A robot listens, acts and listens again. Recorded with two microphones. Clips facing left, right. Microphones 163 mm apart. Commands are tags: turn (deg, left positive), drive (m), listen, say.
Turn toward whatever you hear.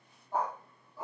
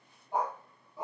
<turn deg="-20"/>
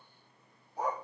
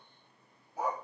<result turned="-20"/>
<turn deg="-30"/>
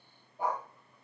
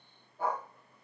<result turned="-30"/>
<turn deg="15"/>
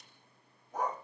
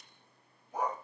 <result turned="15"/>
<turn deg="-10"/>
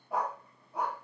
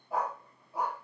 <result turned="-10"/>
<turn deg="-10"/>
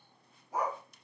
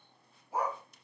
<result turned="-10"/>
<turn deg="-10"/>
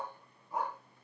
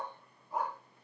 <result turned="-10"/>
<say>Facing the dog barking, 2 to 4 m away.</say>